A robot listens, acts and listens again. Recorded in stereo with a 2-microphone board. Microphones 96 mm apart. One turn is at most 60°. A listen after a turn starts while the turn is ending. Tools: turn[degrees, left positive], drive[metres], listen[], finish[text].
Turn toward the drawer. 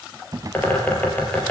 Thought: The drawer: about 40° right or 140° right.
Action: turn[-40]
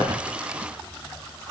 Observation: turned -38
Action: listen[]
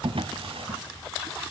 Thought: So it is at 105° right.
Action: turn[-60]
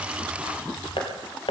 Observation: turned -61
Thought: Nothing new. It was at 45° right.
Action: turn[-45]
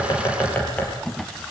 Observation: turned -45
Action: finish[Found it: a drawer, straight ahead, 1 to 2 m away.]